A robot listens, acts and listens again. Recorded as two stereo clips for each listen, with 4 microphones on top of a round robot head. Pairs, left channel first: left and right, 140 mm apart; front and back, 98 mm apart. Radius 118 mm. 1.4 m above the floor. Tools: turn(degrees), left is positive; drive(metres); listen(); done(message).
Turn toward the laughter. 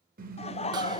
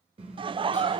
turn(degrees=140)
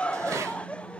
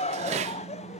done("Found it: laughter, straight ahead, under 1 m away.")